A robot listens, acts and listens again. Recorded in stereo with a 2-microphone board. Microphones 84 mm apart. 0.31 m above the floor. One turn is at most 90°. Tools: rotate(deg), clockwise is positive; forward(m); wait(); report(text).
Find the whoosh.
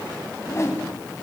rotate(-35)
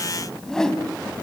rotate(-10)
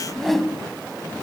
report("Found it: a whoosh, straight ahead, 2 to 4 m away.")